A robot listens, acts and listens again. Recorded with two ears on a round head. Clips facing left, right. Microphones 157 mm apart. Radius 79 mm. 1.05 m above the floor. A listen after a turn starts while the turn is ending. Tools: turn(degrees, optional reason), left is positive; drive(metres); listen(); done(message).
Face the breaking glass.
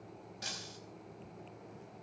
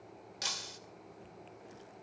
turn(degrees=-90)
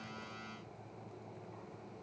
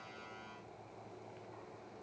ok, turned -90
done("I heard breaking glass from this way, but can't make it out now.")